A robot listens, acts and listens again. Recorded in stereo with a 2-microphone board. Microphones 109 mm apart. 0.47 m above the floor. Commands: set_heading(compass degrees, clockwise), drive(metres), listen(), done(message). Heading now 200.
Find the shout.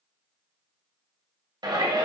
set_heading(240)
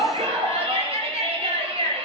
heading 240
set_heading(335)
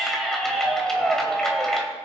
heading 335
done("Found it: a shout, straight ahead, 2 to 4 m away.")